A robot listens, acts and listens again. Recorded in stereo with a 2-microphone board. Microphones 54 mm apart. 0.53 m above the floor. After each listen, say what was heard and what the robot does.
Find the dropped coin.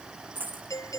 The dropped coin: about 35° right or 145° right. Turn 35° right.
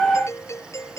Keep listening.
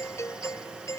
I heard a dropped coin, but can't make it out now. It was about straight ahead or 110° right.